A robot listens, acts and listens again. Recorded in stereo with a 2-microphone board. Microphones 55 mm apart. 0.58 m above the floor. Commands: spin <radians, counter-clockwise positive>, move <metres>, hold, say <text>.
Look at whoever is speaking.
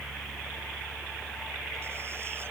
hold
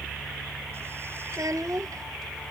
spin -1.57
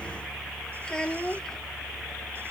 spin 0.17
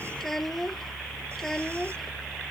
say Found it: a child speaking, straight ahead.